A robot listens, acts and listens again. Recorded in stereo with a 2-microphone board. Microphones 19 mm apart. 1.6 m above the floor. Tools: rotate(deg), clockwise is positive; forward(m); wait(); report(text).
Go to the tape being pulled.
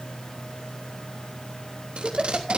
rotate(90)
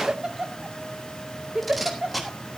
forward(1.0)
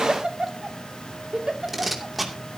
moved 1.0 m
rotate(10)
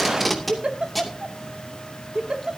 forward(1.0)
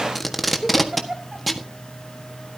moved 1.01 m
forward(1.0)
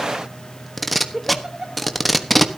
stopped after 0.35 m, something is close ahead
report("I am next to the tape being pulled.")